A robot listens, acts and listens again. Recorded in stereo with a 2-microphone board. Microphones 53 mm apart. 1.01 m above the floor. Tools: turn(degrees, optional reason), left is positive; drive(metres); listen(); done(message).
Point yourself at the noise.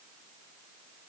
listen()
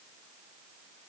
listen()
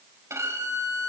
turn(degrees=-65, reason="The violin: about 65° right or 115° right.")
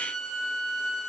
done("Found it: a violin, straight ahead.")